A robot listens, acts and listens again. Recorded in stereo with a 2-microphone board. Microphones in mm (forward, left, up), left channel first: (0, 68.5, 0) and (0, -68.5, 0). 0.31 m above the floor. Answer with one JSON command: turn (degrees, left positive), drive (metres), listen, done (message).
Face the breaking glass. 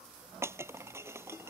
{"turn": -20}
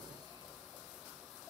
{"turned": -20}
{"listen": true}
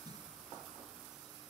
{"done": "I heard breaking glass, but can't make it out now. It was about straight ahead or 140° right."}